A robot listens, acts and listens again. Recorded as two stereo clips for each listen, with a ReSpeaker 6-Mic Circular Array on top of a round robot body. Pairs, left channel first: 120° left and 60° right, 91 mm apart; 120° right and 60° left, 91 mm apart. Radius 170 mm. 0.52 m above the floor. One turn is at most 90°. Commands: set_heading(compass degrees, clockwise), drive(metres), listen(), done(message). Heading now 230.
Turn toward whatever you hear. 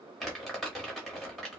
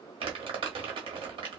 set_heading(200)
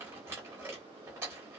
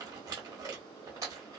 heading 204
done("Facing the crumpling.")